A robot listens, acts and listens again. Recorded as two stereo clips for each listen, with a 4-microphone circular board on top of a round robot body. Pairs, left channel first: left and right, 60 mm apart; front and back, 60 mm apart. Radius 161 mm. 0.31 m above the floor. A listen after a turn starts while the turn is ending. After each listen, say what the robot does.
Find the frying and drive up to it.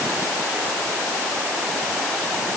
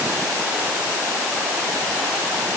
Keep listening.
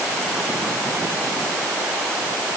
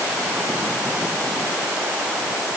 Keep listening.
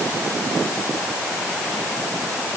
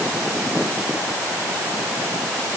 I can't make out frying.